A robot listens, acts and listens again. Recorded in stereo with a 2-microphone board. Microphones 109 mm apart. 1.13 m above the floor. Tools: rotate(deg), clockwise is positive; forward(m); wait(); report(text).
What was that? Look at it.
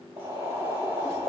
rotate(25)
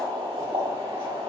rotate(135)
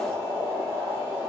rotate(25)
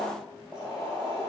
report("Found it: boiling, straight ahead, 2 to 4 m away.")